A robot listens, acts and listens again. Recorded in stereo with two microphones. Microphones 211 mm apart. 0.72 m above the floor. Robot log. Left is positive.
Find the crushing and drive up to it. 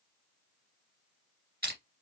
note: The crushing: about 50° right or 130° right.
cmd yaw -50
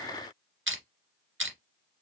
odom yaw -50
note: So it is at 75° right.
cmd yaw -75
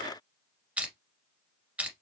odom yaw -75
cmd fwd 1.0
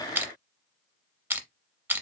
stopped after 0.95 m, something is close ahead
note: The crushing is now 10° right.
cmd yaw -10
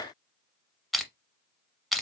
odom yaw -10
end: I am next to the crushing.